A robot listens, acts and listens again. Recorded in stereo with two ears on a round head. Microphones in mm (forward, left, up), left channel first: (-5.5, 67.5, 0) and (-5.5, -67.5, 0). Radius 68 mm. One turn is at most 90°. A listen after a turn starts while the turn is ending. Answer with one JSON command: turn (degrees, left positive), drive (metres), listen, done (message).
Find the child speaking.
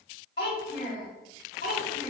{"turn": 55}
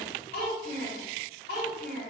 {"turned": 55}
{"turn": 70}
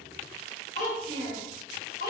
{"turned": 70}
{"turn": 60}
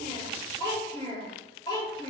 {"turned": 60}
{"turn": 25}
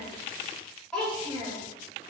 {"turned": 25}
{"done": "Facing the child speaking, 1 to 2 m away."}